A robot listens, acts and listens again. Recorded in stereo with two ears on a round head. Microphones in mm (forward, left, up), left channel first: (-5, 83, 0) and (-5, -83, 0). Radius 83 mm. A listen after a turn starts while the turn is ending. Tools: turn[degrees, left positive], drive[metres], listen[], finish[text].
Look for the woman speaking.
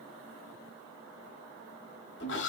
Action: listen[]
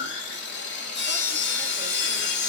Action: listen[]
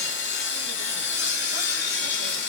Action: finish[I can't make out a woman speaking, only sawing.]